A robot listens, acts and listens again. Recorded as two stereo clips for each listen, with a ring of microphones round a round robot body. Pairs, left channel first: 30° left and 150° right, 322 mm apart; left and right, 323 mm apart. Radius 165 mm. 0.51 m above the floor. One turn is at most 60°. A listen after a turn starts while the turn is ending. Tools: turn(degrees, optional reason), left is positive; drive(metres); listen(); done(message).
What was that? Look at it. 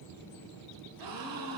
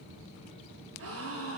turn(degrees=-60, reason="The gasp: 135° right.")
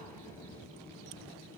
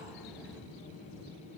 turn(degrees=-60, reason="Nothing new. It was at 75° right.")
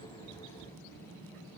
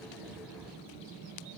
turn(degrees=-15, reason="Nothing new. It was at 15° right.")
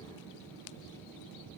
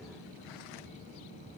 done("I heard a gasp from this way, but can't make it out now.")